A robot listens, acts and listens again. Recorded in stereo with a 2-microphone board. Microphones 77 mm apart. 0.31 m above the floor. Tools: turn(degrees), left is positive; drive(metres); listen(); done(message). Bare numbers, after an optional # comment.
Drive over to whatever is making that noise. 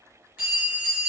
# The bell: about 25° right or 155° right.
turn(-25)
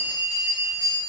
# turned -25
# So it is at 135° right.
turn(-135)
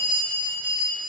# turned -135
# The bell is now 50° right.
turn(-50)
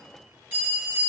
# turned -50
# The bell is now 25° right.
turn(-25)
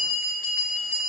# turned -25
drive(1.0)
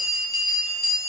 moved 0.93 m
drive(1.0)
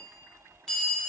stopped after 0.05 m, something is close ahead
# The bell is now 10° left.
turn(10)
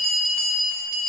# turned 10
done("I am next to the bell.")